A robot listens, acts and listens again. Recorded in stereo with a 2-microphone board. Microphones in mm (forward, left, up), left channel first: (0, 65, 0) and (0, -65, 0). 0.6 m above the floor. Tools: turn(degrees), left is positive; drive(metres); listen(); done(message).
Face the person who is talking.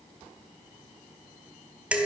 listen()
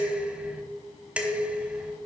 listen()
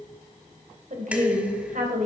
turn(degrees=-65)
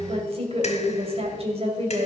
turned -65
turn(degrees=-45)
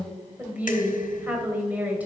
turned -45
turn(degrees=-10)
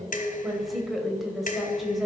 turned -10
done("Found it: a woman speaking, straight ahead.")